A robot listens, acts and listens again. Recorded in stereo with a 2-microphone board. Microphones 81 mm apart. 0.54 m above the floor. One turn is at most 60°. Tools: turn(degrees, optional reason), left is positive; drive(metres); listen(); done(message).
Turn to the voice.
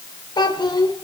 turn(degrees=60, reason="The child speaking: about 65° left or 115° left.")
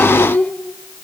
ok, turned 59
turn(degrees=25, reason="So it is at 25° left.")
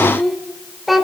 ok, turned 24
done("Facing the child speaking.")